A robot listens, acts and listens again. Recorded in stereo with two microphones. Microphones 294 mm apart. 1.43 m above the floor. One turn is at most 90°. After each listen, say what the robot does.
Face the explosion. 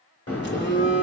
Turn 50° left.
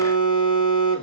Keep listening.
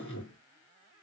I heard an explosion, but can't make it out now. It was about straight ahead or 80° left.